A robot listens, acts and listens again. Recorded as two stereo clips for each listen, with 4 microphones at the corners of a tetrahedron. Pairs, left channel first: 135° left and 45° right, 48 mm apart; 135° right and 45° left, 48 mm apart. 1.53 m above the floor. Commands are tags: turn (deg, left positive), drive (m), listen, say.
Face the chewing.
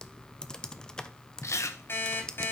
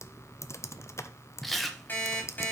<turn deg="135"/>
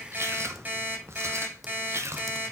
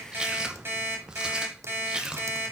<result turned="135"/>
<turn deg="-30"/>
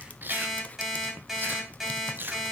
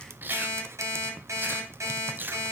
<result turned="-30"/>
<say>Found it: chewing, straight ahead.</say>